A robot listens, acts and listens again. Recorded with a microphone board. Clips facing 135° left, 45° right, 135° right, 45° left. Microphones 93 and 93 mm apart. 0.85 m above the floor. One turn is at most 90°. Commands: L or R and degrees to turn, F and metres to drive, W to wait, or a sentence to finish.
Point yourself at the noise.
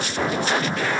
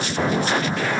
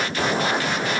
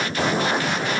W
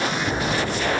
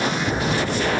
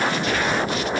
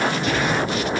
L60
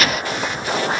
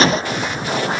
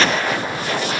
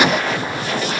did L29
L30
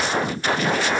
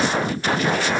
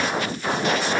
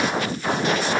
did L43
R15
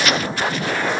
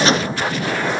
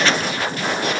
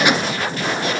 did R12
Facing where the gunshot came from. I can't hear it now.